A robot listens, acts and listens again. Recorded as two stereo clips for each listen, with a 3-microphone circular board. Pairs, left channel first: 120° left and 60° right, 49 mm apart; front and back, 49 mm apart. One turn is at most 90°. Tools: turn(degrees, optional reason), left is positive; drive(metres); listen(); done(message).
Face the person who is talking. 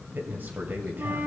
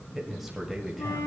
turn(degrees=-90, reason="The man speaking: 95° right.")
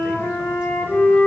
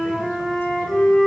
listen()
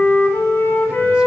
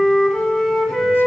listen()
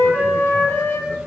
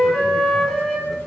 done("Facing where the man speaking came from. I can't hear it now.")